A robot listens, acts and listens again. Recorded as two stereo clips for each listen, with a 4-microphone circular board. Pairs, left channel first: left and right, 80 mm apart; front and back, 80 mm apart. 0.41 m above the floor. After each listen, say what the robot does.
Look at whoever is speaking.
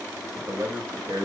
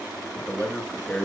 Turn 80° right.
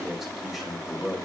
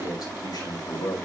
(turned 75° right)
Facing the man speaking.